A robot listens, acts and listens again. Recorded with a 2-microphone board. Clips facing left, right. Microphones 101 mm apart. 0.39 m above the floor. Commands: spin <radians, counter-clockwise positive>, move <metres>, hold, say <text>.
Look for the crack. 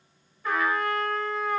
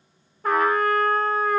hold
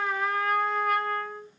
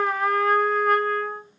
hold
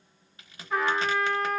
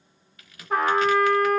spin 0.52
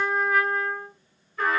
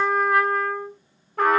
hold
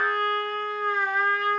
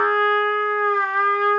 say I heard a crack, but can't make it out now. It was about straight ahead or 120° left.